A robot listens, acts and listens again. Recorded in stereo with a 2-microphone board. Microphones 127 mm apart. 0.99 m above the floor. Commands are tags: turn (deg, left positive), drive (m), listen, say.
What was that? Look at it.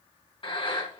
<turn deg="40"/>
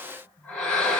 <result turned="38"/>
<turn deg="10"/>
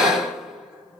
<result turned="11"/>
<say>Found it: breathing, straight ahead, 2 to 4 m away.</say>